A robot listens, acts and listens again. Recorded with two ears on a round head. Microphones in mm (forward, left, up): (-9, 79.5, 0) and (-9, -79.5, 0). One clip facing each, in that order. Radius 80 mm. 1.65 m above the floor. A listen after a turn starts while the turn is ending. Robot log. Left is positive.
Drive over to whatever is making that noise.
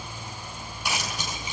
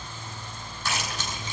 cmd yaw +30
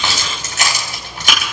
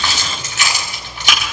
note: So it is at 140° left.
cmd yaw +140
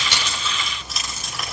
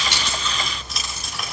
cmd fwd 1.0
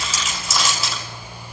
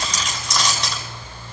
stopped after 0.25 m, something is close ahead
end: Something is in my way. I am facing the keys jangling but have not reached it.